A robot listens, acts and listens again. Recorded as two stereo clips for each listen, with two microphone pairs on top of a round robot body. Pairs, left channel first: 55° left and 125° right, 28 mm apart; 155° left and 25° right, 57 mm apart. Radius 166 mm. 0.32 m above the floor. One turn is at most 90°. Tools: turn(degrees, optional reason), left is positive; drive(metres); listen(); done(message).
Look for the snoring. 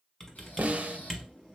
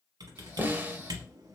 turn(degrees=50, reason="The snoring: 50° left.")
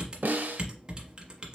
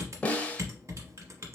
listen()
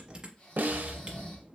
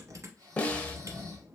done("Facing the snoring.")